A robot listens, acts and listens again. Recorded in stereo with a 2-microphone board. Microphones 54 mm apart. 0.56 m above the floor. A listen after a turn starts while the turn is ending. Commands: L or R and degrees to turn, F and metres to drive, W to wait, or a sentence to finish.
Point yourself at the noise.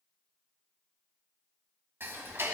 R45
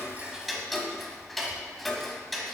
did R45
Found it: ticking, straight ahead.